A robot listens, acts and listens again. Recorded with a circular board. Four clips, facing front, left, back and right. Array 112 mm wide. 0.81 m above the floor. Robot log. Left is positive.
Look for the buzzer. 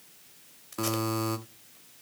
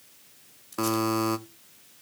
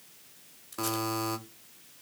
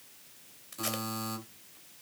note: The buzzer: 90° left.
cmd yaw +90
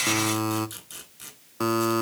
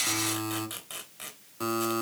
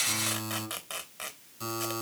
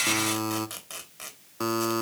note: The buzzer is now 25° right.
cmd yaw -25
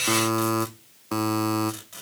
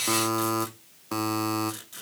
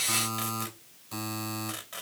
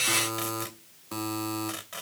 note: The buzzer is now 30° left.
cmd yaw +30
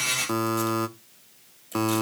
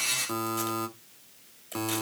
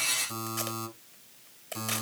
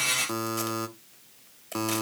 note: The buzzer is now 10° right.
cmd yaw -10
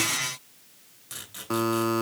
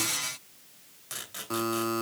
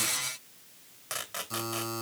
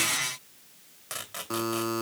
end: Found it: a buzzer, straight ahead.